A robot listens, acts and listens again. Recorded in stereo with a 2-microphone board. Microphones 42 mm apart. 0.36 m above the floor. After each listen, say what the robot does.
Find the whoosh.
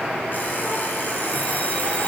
Keep listening.
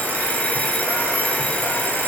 Keep listening.
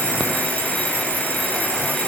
I can't make out a whoosh, only an alarm clock.